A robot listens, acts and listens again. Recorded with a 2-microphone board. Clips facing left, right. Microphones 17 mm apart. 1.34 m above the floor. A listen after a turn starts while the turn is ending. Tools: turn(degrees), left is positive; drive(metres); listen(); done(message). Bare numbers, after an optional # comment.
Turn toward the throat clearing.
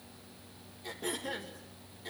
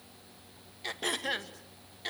# The throat clearing: about 65° right or 115° right.
turn(-65)
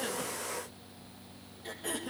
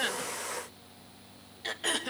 # So it is at 50° right.
turn(-50)
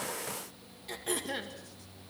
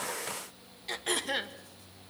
# The throat clearing is now 25° right.
turn(-25)
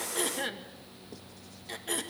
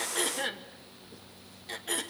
done("Facing the throat clearing.")